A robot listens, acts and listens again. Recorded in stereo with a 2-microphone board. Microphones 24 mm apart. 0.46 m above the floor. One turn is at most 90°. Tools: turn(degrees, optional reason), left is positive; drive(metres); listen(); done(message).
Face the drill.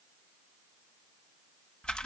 listen()
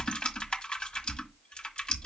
listen()
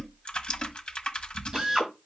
turn(degrees=-30, reason="The drill: about 30° right or 150° right.")
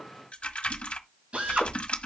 turn(degrees=-90, reason="So it is at 120° right.")
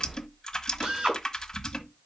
turn(degrees=-55, reason="The drill is now 55° right.")
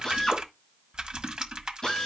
turn(degrees=20, reason="The drill is now 20° left.")
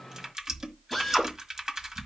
done("Found it: a drill, straight ahead.")